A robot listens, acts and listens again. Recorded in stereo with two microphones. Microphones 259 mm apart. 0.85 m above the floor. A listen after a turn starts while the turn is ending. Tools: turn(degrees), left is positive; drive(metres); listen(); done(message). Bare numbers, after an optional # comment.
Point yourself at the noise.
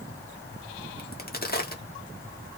# The crack: about 40° left or 140° left.
turn(40)
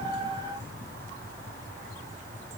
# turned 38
listen()
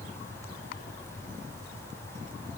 done("I heard a crack, but can't make it out now. It was about straight ahead or 105° left.")